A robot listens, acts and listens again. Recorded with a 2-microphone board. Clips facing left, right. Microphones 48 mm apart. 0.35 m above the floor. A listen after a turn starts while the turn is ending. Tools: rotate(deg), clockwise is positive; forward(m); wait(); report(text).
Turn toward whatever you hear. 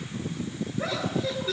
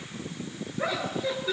rotate(15)
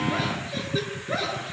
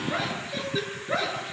rotate(30)
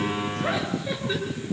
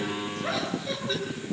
wait()
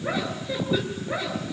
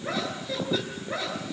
rotate(-10)
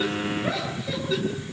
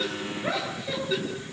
report("Found it: laughter, straight ahead, over 4 m away.")